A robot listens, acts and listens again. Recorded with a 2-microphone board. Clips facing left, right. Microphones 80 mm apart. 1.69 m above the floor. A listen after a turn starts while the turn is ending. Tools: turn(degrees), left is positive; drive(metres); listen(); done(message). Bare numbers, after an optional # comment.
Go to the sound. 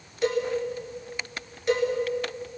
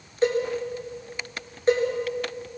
# The cowbell: about 35° right or 145° right.
turn(-35)
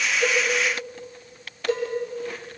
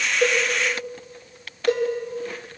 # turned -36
# So it is at 110° right.
turn(-110)
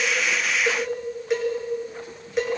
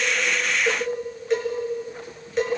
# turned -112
drive(1.0)
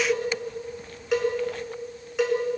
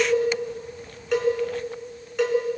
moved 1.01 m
drive(1.0)
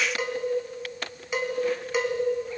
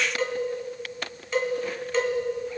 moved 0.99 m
# The cowbell is now 10° left.
turn(10)
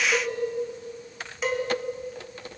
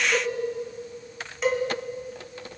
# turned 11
drive(1.0)
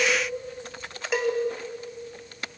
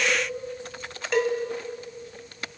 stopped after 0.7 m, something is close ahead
# The cowbell is now 10° left.
turn(10)
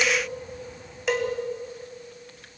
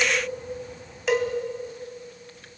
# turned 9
done("Arrived at the cowbell, straight ahead.")